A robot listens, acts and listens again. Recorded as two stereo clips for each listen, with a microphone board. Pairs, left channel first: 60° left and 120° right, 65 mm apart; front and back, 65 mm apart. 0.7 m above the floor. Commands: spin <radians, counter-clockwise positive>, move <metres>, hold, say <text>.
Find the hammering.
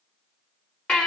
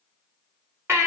hold
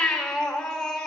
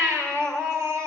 hold
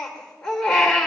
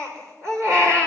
say I can't make out hammering, only a baby crying.